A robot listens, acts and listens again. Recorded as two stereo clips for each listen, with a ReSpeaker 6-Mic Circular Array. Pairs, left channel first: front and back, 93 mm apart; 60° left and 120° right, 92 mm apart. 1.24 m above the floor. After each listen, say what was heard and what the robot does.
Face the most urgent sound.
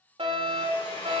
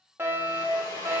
The fire alarm: 175° left. Turn 175° left.
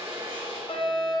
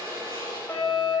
The fire alarm is now 10° right. Turn 10° right.
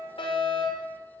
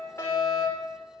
Facing the fire alarm.